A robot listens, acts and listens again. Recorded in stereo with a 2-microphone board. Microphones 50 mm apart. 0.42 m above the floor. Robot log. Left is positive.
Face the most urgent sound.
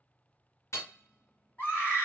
note: The scream: about 45° left or 135° left.
cmd yaw +45
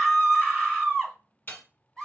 note: So it is at 10° left.
cmd yaw +10
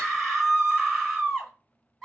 end: Found it: a scream, straight ahead, 1 to 2 m away.